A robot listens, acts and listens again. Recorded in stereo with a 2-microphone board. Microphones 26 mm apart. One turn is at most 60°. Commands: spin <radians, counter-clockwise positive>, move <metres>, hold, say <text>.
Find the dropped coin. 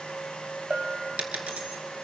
spin -1.05
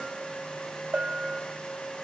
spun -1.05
hold
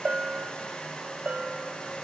say I heard a dropped coin, but can't make it out now. It was about 10° right or 50° right.